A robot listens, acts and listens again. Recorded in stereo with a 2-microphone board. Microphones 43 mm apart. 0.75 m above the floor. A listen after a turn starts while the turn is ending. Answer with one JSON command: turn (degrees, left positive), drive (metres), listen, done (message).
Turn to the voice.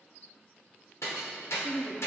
{"turn": 30}
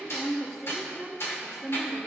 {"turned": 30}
{"done": "Facing the woman speaking."}